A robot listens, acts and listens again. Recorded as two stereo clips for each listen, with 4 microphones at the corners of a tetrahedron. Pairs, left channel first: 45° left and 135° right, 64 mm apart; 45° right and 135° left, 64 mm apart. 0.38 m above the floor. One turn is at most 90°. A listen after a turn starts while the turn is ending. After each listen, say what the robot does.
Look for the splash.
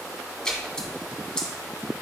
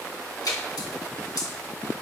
Turn 35° right.
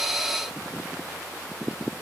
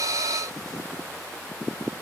Facing where the splash came from. I can't hear it now.